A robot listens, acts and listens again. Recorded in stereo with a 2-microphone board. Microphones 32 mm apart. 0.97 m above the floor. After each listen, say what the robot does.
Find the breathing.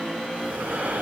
Turn 65° right.
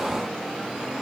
Keep listening.
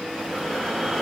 Facing the breathing.